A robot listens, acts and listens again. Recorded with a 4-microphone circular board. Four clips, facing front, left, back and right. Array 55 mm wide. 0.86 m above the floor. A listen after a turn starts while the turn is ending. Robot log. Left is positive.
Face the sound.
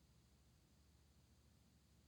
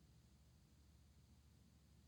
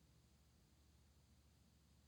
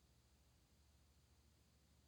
cmd idle
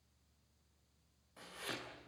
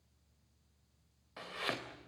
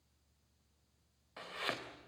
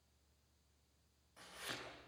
note: The chopping: 130° left.
cmd yaw +130
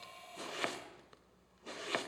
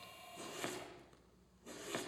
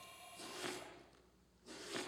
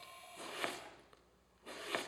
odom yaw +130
note: The chopping is now 25° right.
cmd yaw -25
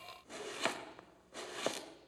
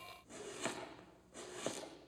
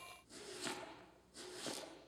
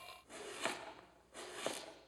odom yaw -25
note: The chopping is now 10° right.
cmd yaw -10
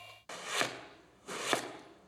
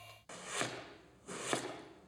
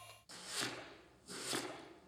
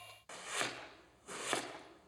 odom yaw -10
end: Found it: chopping, straight ahead, 2 to 4 m away.